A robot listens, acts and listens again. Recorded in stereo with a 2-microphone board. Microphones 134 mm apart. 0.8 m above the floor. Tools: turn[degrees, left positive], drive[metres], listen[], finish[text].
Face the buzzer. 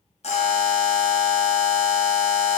Thought: The buzzer: about 55° left or 125° left.
Action: turn[55]
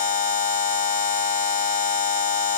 Thought: So it is at 70° left.
Action: turn[70]
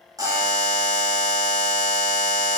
Thought: The buzzer is now 25° right.
Action: turn[-25]
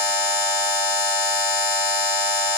Thought: The buzzer is now 15° right.
Action: turn[-15]
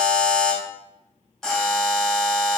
Action: finish[Facing the buzzer.]